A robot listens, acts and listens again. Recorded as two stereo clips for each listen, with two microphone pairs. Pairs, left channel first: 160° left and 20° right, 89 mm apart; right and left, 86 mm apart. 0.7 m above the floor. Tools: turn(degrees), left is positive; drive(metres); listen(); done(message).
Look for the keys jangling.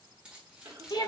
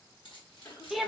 turn(degrees=-105)
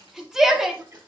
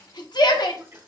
listen()
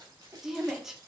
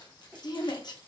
turn(degrees=-60)
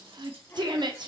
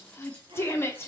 listen()
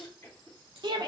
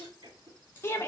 turn(degrees=-25)
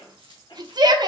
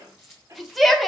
done("Facing the keys jangling, 2 to 4 m away.")